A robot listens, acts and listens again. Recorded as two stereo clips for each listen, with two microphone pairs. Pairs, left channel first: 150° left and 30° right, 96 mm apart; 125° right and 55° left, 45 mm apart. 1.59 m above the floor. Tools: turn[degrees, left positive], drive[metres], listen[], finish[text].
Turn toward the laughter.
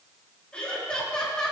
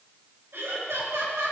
Thought: The laughter: 65° left.
Action: turn[65]
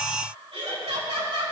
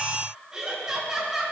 Thought: The laughter is now 25° right.
Action: turn[-25]
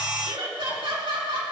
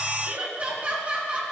Action: finish[Facing the laughter.]